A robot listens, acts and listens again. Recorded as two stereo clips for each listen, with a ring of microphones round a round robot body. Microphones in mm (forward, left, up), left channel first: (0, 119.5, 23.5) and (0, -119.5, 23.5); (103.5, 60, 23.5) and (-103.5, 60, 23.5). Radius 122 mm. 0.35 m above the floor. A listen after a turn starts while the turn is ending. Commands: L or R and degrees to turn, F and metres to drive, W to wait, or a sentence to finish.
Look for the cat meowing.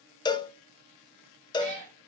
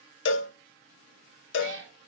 R130
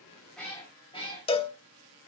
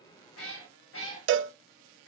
L25
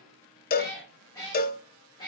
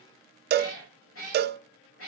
L15
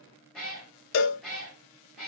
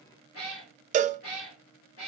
Facing the cat meowing.